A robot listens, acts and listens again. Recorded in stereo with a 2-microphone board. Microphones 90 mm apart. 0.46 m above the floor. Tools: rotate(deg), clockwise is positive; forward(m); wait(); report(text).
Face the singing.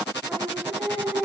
rotate(30)
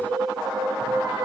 rotate(140)
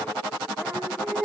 report("Facing the singing, over 4 m away.")